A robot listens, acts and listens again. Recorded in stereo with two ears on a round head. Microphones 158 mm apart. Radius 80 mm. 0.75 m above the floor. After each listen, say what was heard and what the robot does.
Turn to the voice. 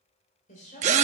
The woman speaking: about 40° left or 140° left. Turn 40° left.
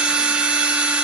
Keep listening.
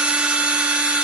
Keep listening.
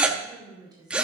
So it is at 25° right. Turn 25° right.
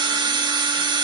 Keep listening.
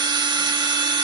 Keep listening.
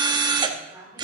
The woman speaking is now 15° right. Turn 15° right.
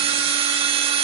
Keep listening.
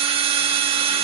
Keep listening.
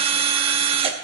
Facing where the woman speaking came from. I can't hear it now.